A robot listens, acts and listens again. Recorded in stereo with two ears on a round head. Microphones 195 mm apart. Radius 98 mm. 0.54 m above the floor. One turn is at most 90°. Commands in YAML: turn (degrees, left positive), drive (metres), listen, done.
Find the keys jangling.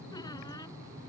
listen: true
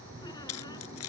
turn: 90
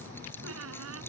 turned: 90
listen: true
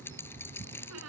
turn: 10
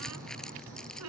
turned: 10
listen: true
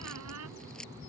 listen: true
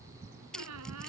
done: "Facing the keys jangling."